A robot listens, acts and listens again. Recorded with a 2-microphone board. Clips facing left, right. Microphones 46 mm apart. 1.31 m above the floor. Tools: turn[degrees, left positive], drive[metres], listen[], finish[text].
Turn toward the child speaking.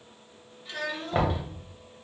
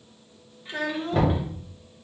Thought: The child speaking: about 25° right or 155° right.
Action: turn[-25]
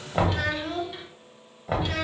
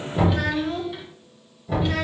Thought: So it is at 10° right.
Action: turn[-10]
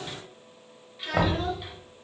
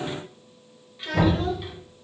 Action: finish[Found it: a child speaking, straight ahead, under 1 m away.]